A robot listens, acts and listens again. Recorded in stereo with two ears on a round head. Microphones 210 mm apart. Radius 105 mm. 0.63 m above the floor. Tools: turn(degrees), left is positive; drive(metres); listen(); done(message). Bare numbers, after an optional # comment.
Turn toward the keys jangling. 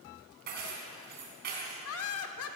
# The keys jangling: about 45° right or 135° right.
turn(-45)
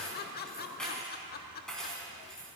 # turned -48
done("Facing the keys jangling, 2 to 4 m away.")